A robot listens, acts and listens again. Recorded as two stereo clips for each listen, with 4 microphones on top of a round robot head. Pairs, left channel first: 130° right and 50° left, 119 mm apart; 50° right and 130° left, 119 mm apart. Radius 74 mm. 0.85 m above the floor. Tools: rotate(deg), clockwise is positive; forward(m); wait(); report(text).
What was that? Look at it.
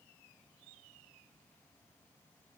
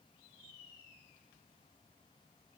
wait()
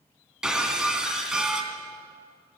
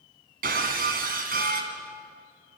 rotate(-135)
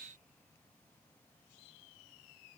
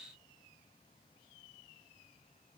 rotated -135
report("Facing where the breaking glass came from. I can't hear it now.")